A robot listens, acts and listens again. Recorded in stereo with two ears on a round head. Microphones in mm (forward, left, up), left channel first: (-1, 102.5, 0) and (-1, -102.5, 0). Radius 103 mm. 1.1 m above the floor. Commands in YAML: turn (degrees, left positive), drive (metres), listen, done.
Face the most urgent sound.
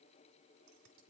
listen: true
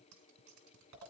listen: true
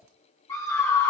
turn: 30
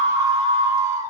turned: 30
turn: -15
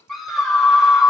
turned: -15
done: "Facing the scream, 2 to 4 m away."